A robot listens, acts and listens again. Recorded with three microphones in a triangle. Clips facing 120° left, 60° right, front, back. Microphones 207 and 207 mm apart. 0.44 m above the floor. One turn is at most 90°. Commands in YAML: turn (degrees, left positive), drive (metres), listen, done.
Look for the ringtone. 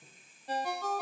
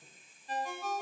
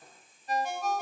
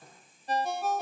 turn: 90
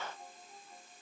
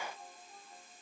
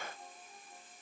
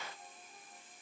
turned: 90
turn: 35
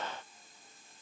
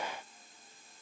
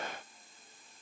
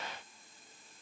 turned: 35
listen: true
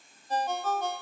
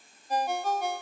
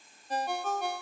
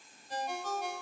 turn: 20
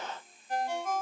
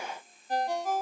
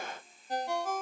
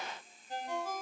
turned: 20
done: "Facing the ringtone, under 1 m away."